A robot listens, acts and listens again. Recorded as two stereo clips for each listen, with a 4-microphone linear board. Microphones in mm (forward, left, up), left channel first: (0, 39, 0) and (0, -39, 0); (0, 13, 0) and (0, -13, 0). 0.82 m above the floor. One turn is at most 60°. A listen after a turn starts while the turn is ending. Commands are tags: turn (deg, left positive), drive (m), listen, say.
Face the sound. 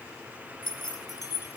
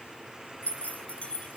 <turn deg="55"/>
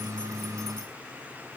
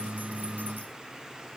<listen/>
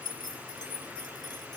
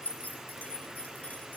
<turn deg="60"/>
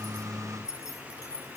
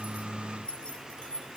<turn deg="45"/>
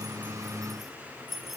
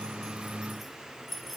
<say>Facing the keys jangling.</say>